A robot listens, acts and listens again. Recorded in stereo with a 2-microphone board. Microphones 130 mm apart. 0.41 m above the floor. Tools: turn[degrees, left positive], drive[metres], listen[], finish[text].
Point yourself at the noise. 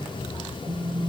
Thought: The phone buzzing: about 35° right or 145° right.
Action: turn[-35]
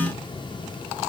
Thought: So it is at 110° right.
Action: turn[-110]
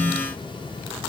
Thought: The phone buzzing is now 30° right.
Action: turn[-30]
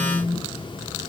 Action: finish[Found it: a phone buzzing, straight ahead, over 4 m away.]